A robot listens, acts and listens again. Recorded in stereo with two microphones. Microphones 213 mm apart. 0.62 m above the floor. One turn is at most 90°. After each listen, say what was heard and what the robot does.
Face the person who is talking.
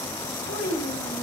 The child speaking: about 65° left or 115° left. Turn 65° left.
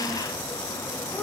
Keep listening.
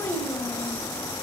Facing the child speaking.